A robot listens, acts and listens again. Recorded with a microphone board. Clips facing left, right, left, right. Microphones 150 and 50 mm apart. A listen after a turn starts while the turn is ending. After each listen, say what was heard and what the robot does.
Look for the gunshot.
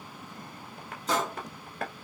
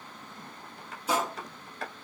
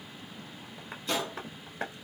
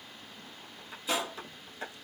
Turn 30° right.
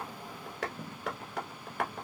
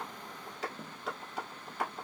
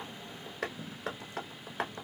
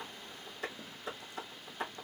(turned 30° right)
Keep listening.
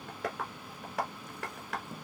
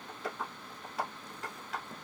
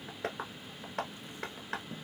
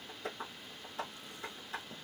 I heard a gunshot, but can't make it out now. It was about 20° left or 140° right.